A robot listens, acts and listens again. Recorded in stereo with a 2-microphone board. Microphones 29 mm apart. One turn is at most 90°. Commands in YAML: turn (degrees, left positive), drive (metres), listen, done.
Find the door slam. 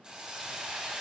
listen: true
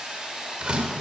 turn: -35
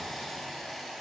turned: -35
listen: true
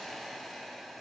done: "I heard a door slam, but can't make it out now. It was about straight ahead or 110° right."